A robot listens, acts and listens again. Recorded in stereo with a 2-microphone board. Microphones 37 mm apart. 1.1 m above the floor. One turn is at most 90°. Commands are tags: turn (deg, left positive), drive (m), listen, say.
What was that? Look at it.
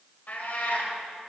<turn deg="60"/>
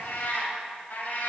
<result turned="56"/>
<turn deg="50"/>
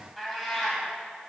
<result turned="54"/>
<say>Facing the cat meowing, 2 to 4 m away.</say>